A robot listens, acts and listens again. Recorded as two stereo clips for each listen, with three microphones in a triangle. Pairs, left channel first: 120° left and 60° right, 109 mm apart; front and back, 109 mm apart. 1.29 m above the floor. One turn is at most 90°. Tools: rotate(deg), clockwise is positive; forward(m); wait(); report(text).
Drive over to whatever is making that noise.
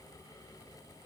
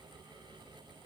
wait()
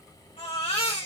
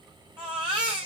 rotate(-90)
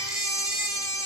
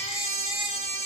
rotate(-65)
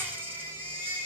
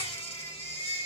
rotate(-10)
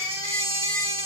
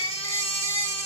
forward(1.0)
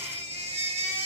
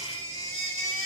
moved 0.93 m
forward(1.0)
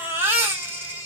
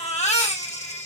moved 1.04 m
rotate(-10)
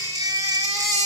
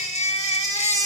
forward(1.0)
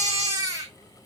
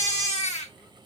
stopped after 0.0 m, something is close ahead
report("Arrived at the baby crying, straight ahead.")